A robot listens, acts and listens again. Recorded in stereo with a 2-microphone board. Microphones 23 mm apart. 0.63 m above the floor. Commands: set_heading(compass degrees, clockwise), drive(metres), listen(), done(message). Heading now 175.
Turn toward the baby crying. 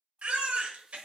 set_heading(265)
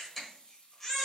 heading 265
set_heading(255)
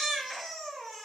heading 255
done("Found it: a baby crying, straight ahead.")